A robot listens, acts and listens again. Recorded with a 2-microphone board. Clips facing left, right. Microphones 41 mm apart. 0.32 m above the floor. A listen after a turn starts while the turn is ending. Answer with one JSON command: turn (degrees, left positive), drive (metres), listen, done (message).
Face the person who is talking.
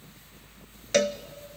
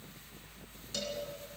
{"listen": true}
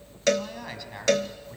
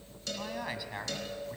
{"turn": -30}
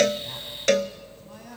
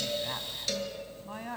{"turn": -140}
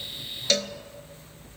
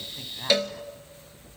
{"listen": true}
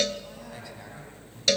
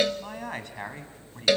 {"turn": -60}
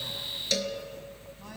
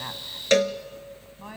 {"listen": true}
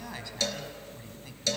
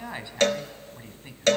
{"turn": -25}
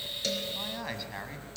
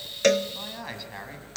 {"done": "Facing the man speaking, 2 to 4 m away."}